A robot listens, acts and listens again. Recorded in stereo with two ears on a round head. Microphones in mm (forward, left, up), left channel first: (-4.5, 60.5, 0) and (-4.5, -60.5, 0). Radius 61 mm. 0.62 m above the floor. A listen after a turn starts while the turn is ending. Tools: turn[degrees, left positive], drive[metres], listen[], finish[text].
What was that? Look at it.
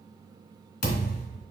Thought: The thud: about 70° left or 110° left.
Action: turn[70]
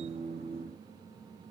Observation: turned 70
Action: listen[]
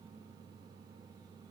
Action: finish[I heard a thud, but can't make it out now. It was about straight ahead or 40° left.]